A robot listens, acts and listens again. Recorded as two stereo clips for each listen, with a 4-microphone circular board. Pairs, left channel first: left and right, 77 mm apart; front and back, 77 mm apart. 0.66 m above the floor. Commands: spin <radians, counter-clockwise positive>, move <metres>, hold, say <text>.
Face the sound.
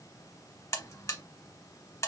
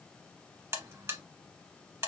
spin 2.27
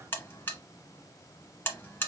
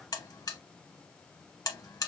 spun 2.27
spin 0.52
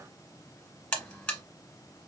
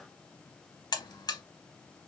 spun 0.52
spin 0.26
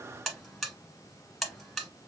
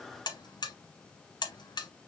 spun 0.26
say Facing the buzzer.